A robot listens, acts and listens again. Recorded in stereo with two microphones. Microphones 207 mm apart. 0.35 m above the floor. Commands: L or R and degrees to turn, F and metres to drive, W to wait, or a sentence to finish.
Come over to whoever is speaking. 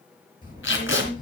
L40
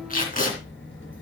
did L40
L100
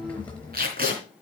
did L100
F1.0
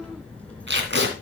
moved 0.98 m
F1.0
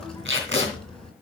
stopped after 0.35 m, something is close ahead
Blocked. The child speaking is further on, straight ahead.